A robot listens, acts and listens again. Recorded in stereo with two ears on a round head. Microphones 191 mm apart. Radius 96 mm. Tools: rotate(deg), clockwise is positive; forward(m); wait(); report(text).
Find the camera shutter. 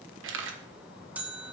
rotate(60)
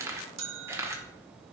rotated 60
rotate(15)
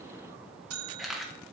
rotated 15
report("Found it: a camera shutter, straight ahead.")